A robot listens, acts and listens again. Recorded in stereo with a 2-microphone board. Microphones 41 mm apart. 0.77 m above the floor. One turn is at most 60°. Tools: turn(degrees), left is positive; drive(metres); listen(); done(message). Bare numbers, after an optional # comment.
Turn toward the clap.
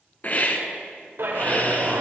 # The clap: about 75° right or 105° right.
turn(-60)
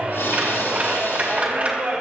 # So it is at 40° right.
turn(-40)
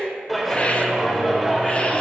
done("Facing the clap.")